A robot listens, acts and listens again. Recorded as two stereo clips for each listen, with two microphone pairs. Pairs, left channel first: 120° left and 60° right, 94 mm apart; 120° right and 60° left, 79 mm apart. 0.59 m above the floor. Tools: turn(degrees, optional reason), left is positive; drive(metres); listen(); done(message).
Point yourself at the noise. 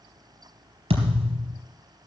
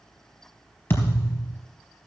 turn(degrees=-55, reason="The thud: 55° right.")
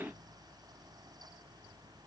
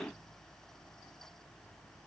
done("I heard a thud from this way, but can't make it out now.")